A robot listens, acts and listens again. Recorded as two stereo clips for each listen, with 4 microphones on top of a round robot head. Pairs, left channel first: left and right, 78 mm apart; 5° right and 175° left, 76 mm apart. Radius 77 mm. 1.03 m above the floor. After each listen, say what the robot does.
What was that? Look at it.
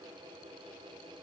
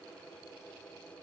Keep listening.
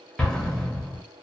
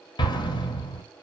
Facing the explosion.